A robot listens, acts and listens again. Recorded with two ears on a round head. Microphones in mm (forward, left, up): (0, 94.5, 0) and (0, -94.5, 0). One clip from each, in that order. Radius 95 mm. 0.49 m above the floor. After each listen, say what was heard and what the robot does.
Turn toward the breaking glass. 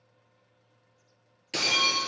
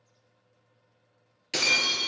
The breaking glass: about 20° right or 160° right. Turn 20° right.
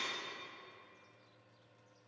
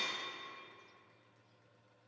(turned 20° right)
Keep listening.
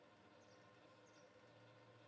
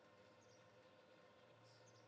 I heard breaking glass, but can't make it out now. It was about straight ahead or 140° right.